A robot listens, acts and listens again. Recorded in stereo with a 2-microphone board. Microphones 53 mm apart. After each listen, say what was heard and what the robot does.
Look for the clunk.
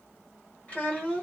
Keep listening.
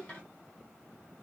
Keep listening.
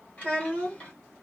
I can't make out a clunk, only a child speaking.